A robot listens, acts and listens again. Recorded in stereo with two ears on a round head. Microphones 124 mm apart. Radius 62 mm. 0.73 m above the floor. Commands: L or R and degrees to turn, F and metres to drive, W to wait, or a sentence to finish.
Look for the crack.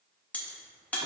L30
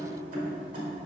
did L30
W
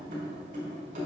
I heard a crack, but can't make it out now. It was about 20° right or 140° left.